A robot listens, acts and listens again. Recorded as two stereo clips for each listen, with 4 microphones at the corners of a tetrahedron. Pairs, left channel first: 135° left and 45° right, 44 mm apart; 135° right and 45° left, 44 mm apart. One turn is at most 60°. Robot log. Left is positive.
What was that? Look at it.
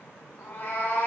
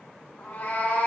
note: The cat meowing: 175° left.
cmd yaw +60
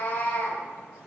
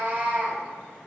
note: The cat meowing is now 95° left.
cmd yaw +60
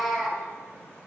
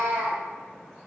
note: The cat meowing is now 40° left.
cmd yaw +40
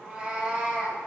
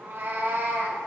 note: The cat meowing is now 20° left.
cmd yaw +20
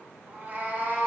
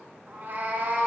end: Facing the cat meowing.